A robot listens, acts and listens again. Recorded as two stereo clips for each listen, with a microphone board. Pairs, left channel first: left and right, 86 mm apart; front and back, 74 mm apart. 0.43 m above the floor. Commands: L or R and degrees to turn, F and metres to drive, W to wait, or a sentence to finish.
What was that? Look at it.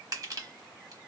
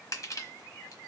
R45
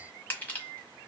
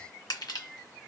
L20
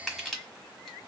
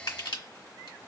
Found it: crushing, straight ahead, 1 to 2 m away.